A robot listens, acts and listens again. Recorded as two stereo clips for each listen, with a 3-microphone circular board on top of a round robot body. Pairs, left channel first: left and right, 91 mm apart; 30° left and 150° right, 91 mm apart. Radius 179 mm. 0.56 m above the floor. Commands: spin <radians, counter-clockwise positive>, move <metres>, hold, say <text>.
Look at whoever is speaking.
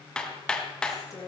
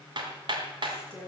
spin 2.53
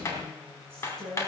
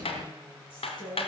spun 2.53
say Found it: a woman speaking, straight ahead, over 4 m away.